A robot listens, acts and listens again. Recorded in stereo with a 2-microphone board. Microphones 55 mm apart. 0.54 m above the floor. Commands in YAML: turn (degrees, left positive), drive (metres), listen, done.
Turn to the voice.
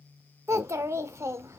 turn: -60
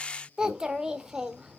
turn: -15
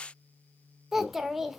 done: "Facing the child speaking."